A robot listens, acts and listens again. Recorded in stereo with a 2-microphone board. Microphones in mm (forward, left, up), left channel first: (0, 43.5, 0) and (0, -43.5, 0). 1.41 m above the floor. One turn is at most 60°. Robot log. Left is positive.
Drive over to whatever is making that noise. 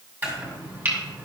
note: The chopping: about 20° right or 160° right.
cmd yaw -20
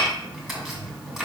cmd fwd 1.0
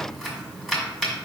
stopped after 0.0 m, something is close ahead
end: Something is in my way. I am facing the chopping but have not reached it.